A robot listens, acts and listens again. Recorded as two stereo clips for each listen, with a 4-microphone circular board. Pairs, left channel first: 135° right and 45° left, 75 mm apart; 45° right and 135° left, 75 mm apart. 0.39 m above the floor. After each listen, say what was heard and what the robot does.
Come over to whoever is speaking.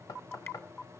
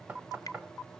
Keep listening.
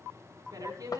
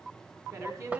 The woman speaking: 85° left. Turn 85° left.
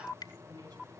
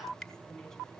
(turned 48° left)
Nothing new. It was at 35° left. Turn 35° left.
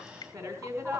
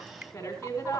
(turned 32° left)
Drive 1.0 m forward.
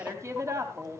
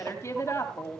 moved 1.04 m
Drive 1.0 m forward.
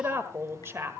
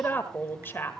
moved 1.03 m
Drive 1.0 m forward.
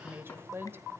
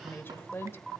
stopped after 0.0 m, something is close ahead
Arrived at the woman speaking, straight ahead.